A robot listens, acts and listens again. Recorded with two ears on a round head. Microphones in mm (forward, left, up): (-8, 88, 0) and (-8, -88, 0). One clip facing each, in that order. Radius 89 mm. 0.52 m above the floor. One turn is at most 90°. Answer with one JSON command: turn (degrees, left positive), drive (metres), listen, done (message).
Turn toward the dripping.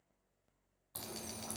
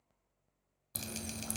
{"turn": -40}
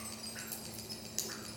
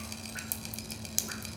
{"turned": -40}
{"turn": -90}
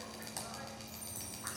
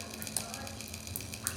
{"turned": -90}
{"turn": -45}
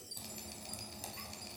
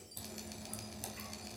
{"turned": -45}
{"done": "Facing the dripping."}